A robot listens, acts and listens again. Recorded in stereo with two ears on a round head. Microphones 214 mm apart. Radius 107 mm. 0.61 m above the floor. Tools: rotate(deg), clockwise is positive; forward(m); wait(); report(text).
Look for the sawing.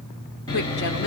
rotate(-20)
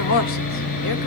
rotate(-140)
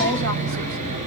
rotate(35)
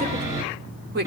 rotate(15)
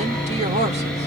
report("Facing the sawing, over 4 m away.")